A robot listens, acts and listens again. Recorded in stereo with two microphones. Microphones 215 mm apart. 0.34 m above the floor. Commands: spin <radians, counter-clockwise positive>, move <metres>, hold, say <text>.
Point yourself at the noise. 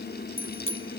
spin 1.22
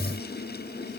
hold
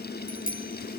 spin 0.70
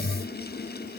hold
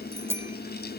spin -0.17
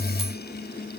hold
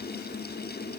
hold
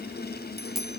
say Found it: a bicycle bell, straight ahead.